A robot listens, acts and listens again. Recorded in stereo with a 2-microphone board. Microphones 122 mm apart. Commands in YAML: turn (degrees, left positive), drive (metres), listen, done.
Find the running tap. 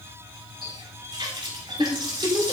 turn: -40
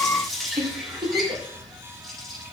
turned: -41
done: "Found it: a running tap, straight ahead."